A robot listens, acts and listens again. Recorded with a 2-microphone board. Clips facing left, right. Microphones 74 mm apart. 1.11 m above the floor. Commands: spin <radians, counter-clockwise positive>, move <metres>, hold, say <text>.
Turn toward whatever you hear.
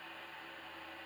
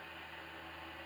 hold
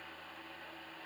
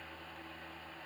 hold
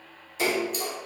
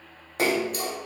spin -0.96
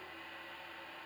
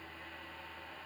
hold
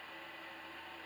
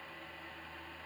say I heard a splash, but can't make it out now. It was about straight ahead or 70° right.